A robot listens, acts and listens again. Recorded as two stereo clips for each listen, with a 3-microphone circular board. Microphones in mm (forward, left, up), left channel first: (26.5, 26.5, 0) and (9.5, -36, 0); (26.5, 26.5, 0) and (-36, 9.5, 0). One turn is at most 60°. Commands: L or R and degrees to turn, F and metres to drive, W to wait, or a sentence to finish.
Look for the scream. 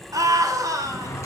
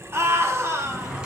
R60
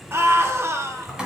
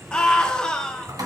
R60
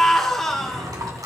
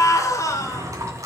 R10
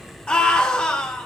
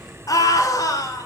Facing the scream.